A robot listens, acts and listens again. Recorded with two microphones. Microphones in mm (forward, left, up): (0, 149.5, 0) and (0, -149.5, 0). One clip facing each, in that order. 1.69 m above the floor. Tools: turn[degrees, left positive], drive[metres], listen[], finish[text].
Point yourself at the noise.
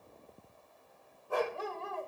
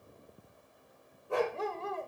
Thought: The dog barking: about 20° right or 160° right.
Action: turn[-20]
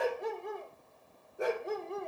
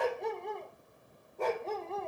Thought: So it is at 20° left.
Action: turn[20]
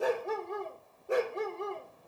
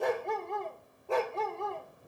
Thought: The dog barking is now 25° left.
Action: turn[25]
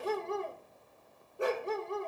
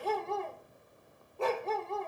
Thought: The dog barking is now 15° left.
Action: turn[15]
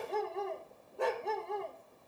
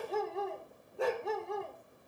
Action: finish[Found it: a dog barking, straight ahead.]